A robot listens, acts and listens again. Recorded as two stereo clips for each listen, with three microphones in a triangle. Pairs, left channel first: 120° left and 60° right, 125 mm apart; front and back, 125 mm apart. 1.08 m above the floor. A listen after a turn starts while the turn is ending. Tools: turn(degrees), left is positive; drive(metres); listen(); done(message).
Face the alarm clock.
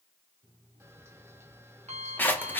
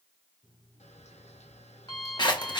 turn(degrees=-45)
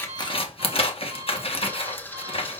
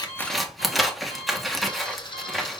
listen()
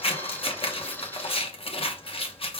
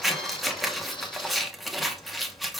listen()
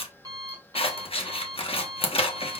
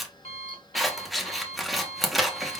done("Found it: an alarm clock, straight ahead.")